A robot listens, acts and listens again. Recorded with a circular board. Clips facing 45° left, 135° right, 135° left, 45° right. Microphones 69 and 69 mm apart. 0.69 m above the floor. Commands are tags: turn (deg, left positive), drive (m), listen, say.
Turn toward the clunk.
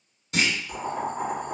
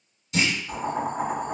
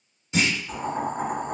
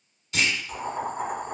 <turn deg="70"/>
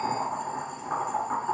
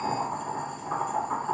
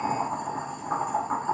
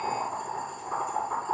<say>I heard a clunk from this way, but can't make it out now.</say>